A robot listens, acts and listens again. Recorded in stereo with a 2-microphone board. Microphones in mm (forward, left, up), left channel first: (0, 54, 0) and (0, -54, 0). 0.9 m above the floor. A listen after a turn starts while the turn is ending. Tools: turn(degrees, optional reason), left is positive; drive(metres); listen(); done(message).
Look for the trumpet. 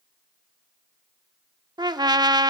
turn(degrees=-40, reason="The trumpet: about 40° right or 140° right.")
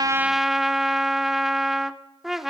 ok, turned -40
done("Found it: a trumpet, straight ahead.")